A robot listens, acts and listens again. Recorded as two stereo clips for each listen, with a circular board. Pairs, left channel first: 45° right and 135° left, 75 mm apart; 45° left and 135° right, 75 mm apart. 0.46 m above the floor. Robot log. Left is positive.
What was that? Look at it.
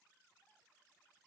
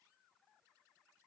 cmd idle
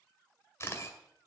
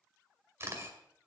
note: The camera shutter: 90° right.
cmd yaw -90
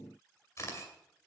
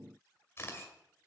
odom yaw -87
end: Found it: a camera shutter, straight ahead.